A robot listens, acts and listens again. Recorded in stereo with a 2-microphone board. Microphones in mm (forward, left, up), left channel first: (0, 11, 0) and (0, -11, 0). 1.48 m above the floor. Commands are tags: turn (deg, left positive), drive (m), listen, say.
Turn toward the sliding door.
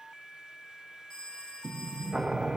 <turn deg="-30"/>
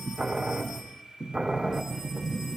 <turn deg="-145"/>
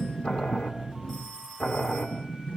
<turn deg="40"/>
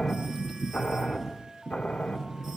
<turn deg="15"/>
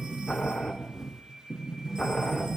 <say>Facing the sliding door.</say>